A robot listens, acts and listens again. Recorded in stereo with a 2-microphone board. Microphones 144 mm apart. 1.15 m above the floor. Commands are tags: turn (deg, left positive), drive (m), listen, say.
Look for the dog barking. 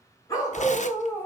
<turn deg="30"/>
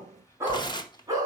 <turn deg="-25"/>
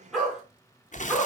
<turn deg="-10"/>
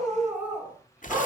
<turn deg="-15"/>
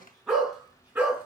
<turn deg="-10"/>
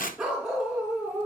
<say>Found it: a dog barking, straight ahead.</say>